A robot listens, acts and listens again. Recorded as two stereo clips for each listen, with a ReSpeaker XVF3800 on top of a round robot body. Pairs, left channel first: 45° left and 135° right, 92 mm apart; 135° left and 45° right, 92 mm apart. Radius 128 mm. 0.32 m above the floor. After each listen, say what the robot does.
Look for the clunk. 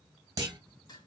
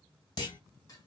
Turn 175° left.
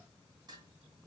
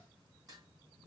I heard a clunk from this way, but can't make it out now.